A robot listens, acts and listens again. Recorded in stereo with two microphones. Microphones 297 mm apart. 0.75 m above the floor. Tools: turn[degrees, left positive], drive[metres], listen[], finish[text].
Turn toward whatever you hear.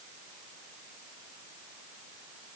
Action: listen[]
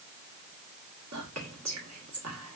Thought: The whispering: about 65° right or 115° right.
Action: turn[-65]
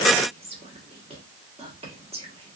Thought: So it is at 25° right.
Action: turn[-25]
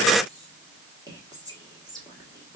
Thought: The whispering is now 15° right.
Action: turn[-15]
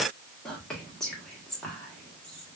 Action: finish[Facing the whispering, 1 to 2 m away.]